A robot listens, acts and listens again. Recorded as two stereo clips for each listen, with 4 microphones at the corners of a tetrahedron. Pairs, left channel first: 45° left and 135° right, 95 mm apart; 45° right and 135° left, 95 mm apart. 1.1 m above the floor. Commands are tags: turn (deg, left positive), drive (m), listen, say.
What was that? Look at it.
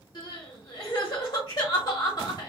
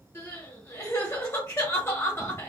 <turn deg="10"/>
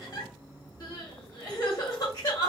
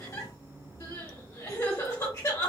<turn deg="10"/>
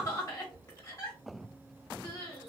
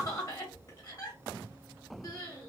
<say>Found it: crying, straight ahead, 1 to 2 m away.</say>